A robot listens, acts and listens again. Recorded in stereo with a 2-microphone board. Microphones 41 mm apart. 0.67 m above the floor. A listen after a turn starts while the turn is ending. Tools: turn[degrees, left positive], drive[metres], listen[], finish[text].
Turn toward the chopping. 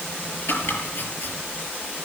Thought: The chopping: about 65° left or 115° left.
Action: turn[65]
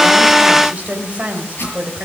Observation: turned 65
Thought: So it is at 50° left.
Action: turn[50]
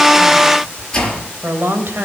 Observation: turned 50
Thought: The chopping is now 15° left.
Action: turn[15]
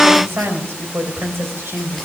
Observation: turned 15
Action: listen[]
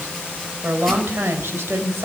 Action: listen[]
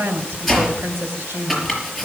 Action: finish[Found it: chopping, straight ahead, over 4 m away.]